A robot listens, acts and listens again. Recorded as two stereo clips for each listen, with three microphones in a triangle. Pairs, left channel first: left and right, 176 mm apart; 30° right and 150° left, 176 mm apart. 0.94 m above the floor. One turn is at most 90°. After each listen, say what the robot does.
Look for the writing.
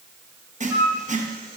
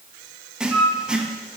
Turn 90° right.
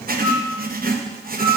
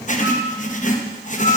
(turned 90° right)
Turn 70° right.
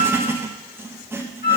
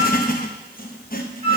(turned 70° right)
Turn 15° right.
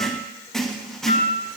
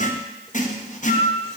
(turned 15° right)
Facing the writing.